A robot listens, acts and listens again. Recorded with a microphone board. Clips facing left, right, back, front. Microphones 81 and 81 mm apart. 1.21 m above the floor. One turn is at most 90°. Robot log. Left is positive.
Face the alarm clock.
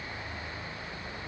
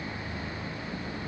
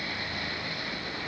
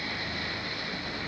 cmd idle
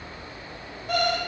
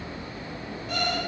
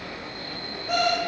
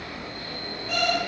note: The alarm clock: 130° left.
cmd yaw +90
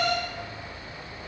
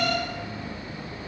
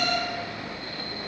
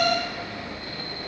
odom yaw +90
note: The alarm clock is now 35° left.
cmd yaw +35
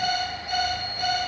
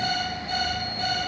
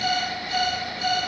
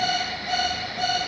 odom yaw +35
note: The alarm clock is now 15° left.
cmd yaw +15
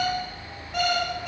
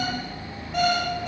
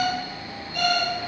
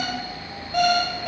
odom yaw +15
end: Facing the alarm clock.